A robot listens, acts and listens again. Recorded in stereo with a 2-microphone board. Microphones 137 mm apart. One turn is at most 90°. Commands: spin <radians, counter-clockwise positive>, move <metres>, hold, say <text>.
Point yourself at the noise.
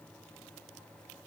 hold
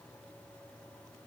hold
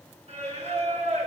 spin -0.96
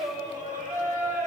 spin -1.22
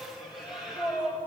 say Facing the singing, over 4 m away.